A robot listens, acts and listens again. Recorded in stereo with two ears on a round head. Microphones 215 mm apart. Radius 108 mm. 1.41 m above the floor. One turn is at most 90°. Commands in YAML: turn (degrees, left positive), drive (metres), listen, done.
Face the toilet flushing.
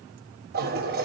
turn: -40
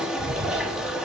done: "Facing the toilet flushing, 1 to 2 m away."